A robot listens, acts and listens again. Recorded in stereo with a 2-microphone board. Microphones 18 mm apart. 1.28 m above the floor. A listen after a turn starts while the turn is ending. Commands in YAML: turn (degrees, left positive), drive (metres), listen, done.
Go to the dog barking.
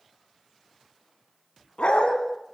turn: 65
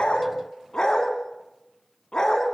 turn: 45
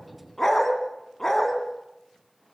turn: 25
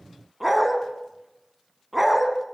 turn: -10
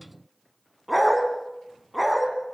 drive: 1.0
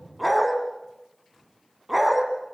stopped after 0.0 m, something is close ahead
done: "Blocked. The dog barking is further on, straight ahead."